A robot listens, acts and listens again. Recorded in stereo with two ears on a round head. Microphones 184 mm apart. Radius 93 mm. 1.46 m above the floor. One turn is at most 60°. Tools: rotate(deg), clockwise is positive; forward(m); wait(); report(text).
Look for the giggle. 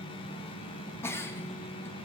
rotate(-30)
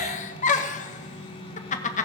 rotate(-60)
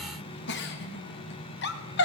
rotate(-60)
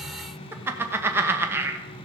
rotate(10)
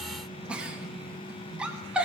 report("Facing the giggle.")